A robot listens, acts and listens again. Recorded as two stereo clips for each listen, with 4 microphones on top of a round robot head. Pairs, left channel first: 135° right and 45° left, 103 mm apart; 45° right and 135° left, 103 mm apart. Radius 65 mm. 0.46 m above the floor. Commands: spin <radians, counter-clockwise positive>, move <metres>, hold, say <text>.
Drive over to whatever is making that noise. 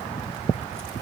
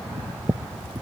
hold
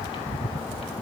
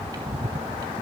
hold
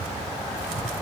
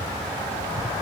say I can't make out anything.